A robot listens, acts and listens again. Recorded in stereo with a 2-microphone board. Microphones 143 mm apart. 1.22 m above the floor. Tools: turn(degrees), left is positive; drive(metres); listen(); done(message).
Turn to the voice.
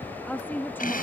turn(degrees=30)
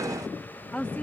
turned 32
turn(degrees=30)
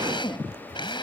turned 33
listen()
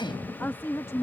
turn(degrees=20)
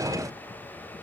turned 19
listen()
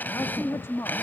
turn(degrees=20)
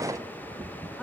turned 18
listen()
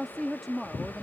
turn(degrees=30)
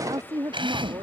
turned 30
turn(degrees=-30)
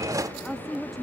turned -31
done("Found it: a woman speaking, straight ahead.")